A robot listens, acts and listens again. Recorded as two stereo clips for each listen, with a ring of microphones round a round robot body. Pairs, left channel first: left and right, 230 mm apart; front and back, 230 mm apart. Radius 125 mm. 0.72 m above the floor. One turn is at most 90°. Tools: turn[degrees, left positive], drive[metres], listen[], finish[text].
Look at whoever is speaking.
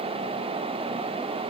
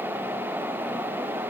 Action: listen[]
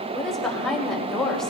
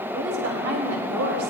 Thought: The woman speaking: straight behind.
Action: turn[90]
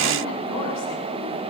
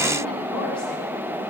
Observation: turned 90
Thought: Nothing new. It was at 90° left.
Action: turn[90]
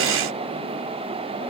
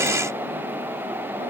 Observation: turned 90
Action: listen[]
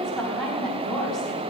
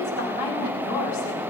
Action: finish[Found it: a woman speaking, straight ahead.]